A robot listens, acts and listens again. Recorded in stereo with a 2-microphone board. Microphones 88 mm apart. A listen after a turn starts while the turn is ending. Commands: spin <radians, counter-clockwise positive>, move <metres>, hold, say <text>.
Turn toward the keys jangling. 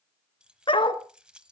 spin -0.52
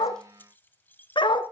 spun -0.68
spin 0.44
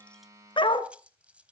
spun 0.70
spin -0.26
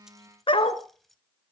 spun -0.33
say Facing the keys jangling.